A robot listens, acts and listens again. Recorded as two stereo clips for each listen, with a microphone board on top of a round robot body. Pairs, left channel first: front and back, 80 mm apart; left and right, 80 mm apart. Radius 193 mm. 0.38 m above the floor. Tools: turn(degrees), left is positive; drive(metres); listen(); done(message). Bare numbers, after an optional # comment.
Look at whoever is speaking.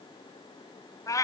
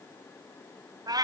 listen()
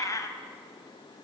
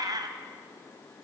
listen()
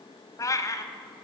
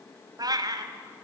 done("I can't make out anyone speaking to turn to.")